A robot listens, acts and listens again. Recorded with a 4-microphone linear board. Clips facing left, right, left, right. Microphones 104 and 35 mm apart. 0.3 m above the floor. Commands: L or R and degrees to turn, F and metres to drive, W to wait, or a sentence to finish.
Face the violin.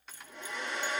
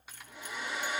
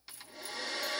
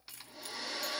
W
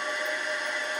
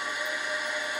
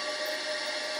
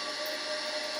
W
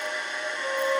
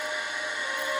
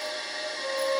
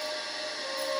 L25
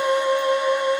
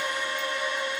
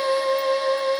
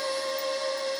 L130
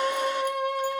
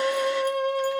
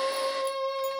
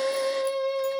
L15
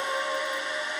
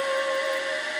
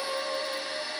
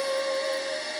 Facing the violin, 2 to 4 m away.